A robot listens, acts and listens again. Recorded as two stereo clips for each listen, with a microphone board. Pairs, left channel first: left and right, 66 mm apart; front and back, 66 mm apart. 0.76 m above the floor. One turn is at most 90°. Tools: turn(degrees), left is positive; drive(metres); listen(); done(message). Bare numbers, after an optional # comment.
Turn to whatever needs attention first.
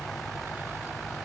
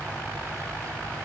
listen()
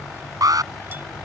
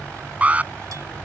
# The alarm: 110° right.
turn(-90)
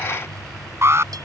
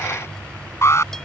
# The alarm is now 45° right.
turn(-45)
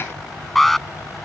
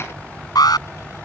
done("Facing the alarm.")